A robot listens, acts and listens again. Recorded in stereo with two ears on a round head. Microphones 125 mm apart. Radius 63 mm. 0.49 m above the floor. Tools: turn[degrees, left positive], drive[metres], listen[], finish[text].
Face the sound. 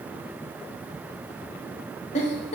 Thought: The giggle: about 45° left or 135° left.
Action: turn[45]
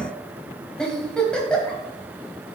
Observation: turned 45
Action: finish[Facing the giggle.]